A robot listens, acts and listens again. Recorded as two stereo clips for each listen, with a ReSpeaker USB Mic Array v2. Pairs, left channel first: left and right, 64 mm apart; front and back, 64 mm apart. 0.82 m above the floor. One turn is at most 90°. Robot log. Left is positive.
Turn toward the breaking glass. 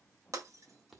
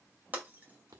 note: The breaking glass: 120° right.
cmd yaw -90
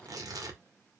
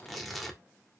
note: Nothing new. It was at 30° right.
cmd yaw -30
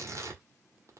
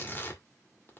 end: I heard breaking glass from this way, but can't make it out now.